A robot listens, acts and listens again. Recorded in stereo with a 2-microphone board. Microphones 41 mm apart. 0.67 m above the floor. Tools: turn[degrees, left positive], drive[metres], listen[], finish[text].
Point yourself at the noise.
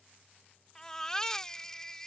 Action: turn[30]
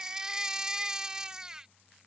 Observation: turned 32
Thought: So it is at 20° right.
Action: turn[-20]
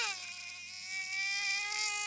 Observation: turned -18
Action: finish[Found it: a baby crying, straight ahead.]